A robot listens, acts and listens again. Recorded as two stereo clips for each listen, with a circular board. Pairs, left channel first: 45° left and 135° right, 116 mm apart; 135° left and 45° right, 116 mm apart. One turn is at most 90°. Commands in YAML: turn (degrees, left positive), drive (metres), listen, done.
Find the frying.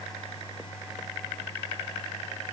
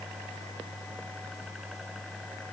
listen: true
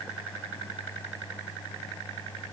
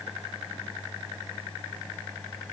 listen: true
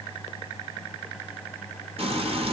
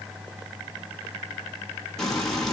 turn: -90
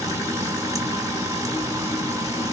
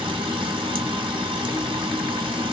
turn: -80
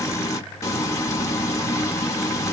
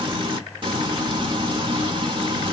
turn: -15
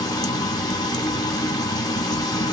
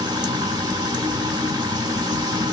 done: "Facing the frying, 1 to 2 m away."